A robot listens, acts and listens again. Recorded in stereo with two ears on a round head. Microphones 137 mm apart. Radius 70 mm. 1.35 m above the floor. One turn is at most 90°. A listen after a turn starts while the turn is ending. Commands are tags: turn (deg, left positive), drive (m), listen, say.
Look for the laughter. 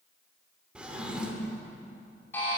<listen/>
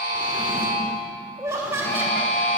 <turn deg="-15"/>
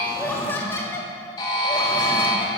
<turn deg="20"/>
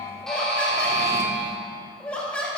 <turn deg="10"/>
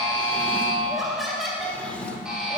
<say>Found it: laughter, straight ahead.</say>